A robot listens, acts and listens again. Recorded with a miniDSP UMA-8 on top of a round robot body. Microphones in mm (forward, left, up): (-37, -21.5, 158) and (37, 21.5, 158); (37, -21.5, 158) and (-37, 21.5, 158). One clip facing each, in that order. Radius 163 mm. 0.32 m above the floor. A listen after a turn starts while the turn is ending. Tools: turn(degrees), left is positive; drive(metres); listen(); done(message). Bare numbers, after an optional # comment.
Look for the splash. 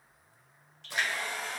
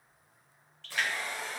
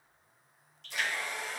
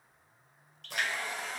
# The splash: 140° left.
turn(140)
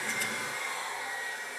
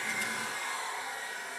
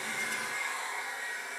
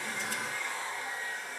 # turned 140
done("I heard a splash from this way, but can't make it out now.")